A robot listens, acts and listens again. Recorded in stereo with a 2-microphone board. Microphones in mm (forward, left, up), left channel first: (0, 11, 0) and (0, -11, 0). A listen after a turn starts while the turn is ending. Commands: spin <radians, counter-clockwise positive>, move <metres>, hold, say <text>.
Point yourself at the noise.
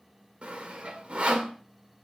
spin -1.05
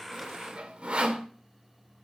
spin -1.13
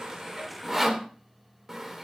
spin -0.17
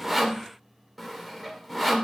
say Found it: sawing, straight ahead.